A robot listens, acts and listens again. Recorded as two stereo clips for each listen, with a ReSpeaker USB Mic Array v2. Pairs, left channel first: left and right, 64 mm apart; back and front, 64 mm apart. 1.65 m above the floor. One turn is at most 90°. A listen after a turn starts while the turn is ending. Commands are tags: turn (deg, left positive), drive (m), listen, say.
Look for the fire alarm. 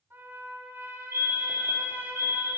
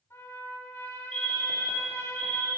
<turn deg="90"/>
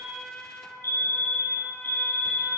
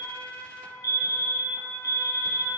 <turn deg="45"/>
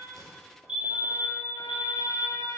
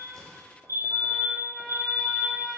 <turn deg="-20"/>
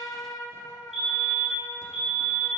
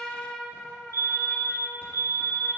<turn deg="-10"/>
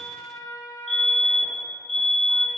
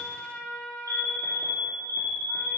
<say>Facing the fire alarm, 1 to 2 m away.</say>